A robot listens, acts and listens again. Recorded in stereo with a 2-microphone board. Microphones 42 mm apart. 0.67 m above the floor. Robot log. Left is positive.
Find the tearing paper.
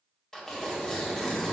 cmd yaw +30
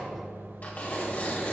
note: So it is at 135° left.
cmd yaw +135
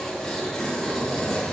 note: The tearing paper is now 10° left.
cmd yaw +10
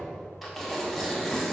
end: Facing the tearing paper, 2 to 4 m away.